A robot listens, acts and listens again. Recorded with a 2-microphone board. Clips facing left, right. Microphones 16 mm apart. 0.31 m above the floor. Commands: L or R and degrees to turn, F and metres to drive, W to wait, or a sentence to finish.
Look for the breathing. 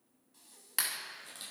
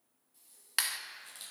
L35
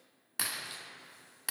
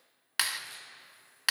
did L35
W
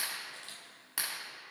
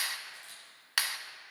W
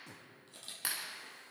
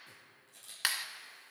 I heard breathing, but can't make it out now. It was about straight ahead or 110° left.